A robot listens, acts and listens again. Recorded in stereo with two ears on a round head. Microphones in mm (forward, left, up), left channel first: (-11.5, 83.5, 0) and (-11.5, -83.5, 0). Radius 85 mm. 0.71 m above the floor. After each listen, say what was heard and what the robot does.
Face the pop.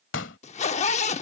The pop: about 70° left or 110° left. Turn 70° left.
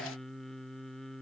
Keep listening.
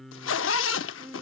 I heard a pop, but can't make it out now. It was about straight ahead or 40° left.